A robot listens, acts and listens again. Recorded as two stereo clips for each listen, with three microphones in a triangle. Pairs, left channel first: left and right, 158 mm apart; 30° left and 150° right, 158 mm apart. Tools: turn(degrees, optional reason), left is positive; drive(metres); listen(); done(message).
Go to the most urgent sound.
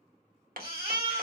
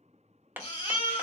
turn(degrees=-20, reason="The baby crying: 20° right.")
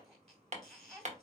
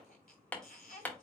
drive(metres=1.0)
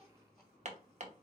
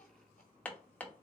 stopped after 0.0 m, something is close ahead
listen()
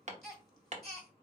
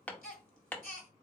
done("Something is in my way. I am facing the baby crying but have not reached it.")